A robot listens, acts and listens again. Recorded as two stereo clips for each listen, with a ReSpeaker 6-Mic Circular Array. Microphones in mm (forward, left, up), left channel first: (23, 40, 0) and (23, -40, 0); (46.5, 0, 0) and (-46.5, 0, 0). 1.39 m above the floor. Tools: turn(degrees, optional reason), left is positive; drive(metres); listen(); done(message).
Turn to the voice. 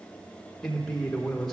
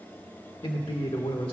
done("Facing the man speaking, 1 to 2 m away.")